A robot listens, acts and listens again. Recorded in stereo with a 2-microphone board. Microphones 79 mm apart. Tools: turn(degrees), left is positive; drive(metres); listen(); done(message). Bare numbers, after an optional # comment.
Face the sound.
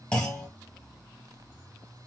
# The clunk: about 15° left or 165° left.
turn(15)
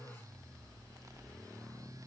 listen()
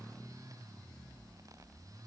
done("I heard a clunk, but can't make it out now. It was about straight ahead or 150° left.")